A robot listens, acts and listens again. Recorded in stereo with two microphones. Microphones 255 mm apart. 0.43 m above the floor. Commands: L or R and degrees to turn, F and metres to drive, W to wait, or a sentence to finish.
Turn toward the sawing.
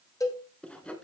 L30
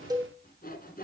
L145
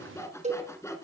L10
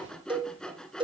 Facing the sawing, 1 to 2 m away.